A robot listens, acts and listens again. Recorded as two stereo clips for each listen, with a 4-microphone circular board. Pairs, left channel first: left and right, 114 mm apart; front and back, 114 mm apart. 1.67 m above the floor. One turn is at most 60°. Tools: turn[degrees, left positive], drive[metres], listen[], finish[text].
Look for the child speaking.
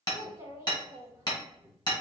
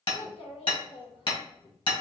Thought: The child speaking: 25° right.
Action: turn[-25]
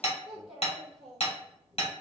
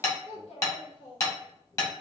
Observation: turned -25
Action: finish[Found it: a child speaking, straight ahead.]